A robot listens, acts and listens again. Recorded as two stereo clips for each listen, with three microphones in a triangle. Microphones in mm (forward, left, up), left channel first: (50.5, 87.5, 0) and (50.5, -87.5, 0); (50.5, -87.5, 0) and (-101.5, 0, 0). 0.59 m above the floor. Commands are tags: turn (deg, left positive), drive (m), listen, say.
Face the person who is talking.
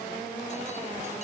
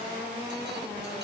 <listen/>
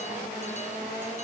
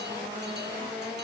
<listen/>
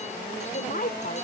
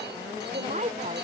<turn deg="110"/>
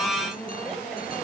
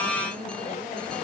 <listen/>
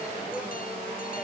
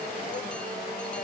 <listen/>
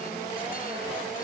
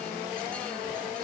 <say>I heard a woman speaking from this way, but can't make it out now.</say>